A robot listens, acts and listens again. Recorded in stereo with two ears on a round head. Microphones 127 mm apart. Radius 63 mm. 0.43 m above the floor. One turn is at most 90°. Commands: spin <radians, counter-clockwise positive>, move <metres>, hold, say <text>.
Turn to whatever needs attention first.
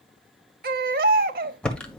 spin -1.22
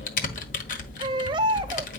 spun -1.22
spin -0.61
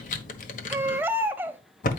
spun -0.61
spin -0.26
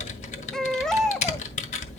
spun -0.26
say Facing the baby crying, under 1 m away.